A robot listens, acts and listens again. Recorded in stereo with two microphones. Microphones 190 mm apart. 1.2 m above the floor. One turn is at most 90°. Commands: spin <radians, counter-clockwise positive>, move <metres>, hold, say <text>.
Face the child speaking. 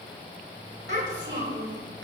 spin -1.57
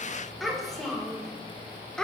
say Found it: a child speaking, straight ahead, 2 to 4 m away.